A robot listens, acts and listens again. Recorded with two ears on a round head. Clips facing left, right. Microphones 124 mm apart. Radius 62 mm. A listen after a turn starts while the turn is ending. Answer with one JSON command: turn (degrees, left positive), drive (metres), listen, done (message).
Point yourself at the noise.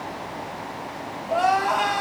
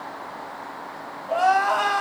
{"turn": 30}
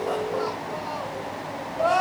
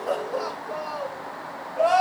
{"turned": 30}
{"turn": -20}
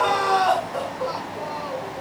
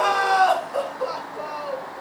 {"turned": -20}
{"done": "Facing the crying."}